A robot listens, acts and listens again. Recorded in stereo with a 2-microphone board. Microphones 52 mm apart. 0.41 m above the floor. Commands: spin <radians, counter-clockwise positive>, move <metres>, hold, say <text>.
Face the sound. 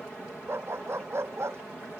spin -0.96
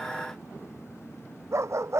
spin -1.13
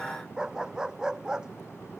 spin -0.26
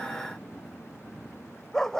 spin 0.17
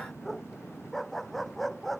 say Facing the dog barking.